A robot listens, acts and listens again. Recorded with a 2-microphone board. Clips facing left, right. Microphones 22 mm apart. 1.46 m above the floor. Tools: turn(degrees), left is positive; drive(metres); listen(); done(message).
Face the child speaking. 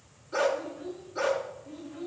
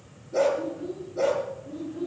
turn(degrees=50)
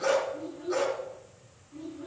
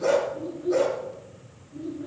turn(degrees=80)
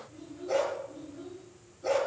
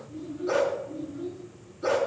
done("Facing the child speaking, over 4 m away.")